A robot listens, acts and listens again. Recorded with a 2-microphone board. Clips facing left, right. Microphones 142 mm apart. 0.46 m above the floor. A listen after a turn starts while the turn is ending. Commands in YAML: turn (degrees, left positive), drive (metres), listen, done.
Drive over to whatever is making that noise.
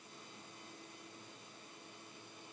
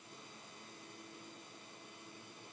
listen: true
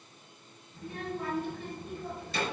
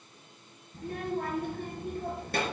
turn: -60
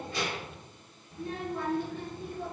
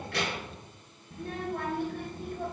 turn: -60
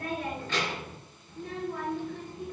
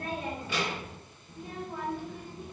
turn: -10
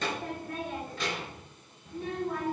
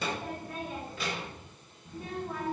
drive: 1.0
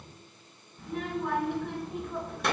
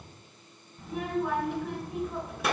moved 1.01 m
drive: 1.0
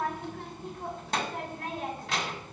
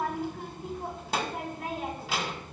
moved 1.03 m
drive: 1.0
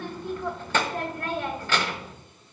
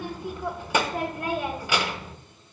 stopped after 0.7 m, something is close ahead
turn: -15
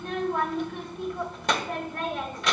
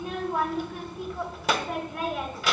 done: "I am next to the child speaking."